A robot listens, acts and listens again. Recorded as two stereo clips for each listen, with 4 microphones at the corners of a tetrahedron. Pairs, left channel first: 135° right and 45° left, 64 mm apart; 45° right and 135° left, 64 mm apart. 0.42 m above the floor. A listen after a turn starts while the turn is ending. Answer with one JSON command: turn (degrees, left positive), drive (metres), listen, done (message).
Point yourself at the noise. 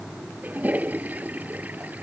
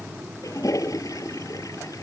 {"turn": -20}
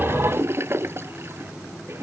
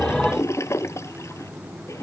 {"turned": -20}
{"done": "Facing the toilet flushing."}